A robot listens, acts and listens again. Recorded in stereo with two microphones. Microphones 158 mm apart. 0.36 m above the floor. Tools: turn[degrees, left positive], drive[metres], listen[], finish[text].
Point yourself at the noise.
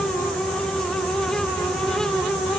Action: listen[]
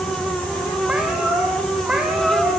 Action: turn[-30]
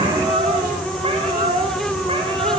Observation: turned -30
Thought: So it is at 140° right.
Action: turn[-140]
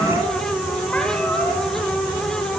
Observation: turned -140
Action: listen[]
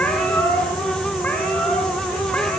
Thought: The cat meowing is now 10° left.
Action: turn[10]
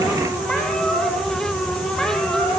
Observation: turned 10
Action: finish[Found it: a cat meowing, straight ahead.]